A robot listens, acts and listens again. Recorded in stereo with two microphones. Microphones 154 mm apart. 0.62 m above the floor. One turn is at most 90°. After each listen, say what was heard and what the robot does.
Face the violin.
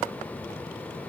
Keep listening.
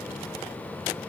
Keep listening.
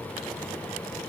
I can't make out a violin.